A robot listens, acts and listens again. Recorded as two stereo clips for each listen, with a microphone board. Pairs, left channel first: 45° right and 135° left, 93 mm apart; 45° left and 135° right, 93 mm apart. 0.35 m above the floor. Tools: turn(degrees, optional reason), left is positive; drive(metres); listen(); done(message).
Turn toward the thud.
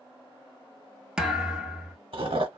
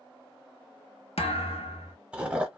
turn(degrees=55, reason="The thud: 55° left.")
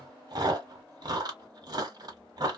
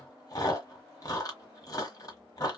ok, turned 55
done("Facing where the thud came from. I can't hear it now.")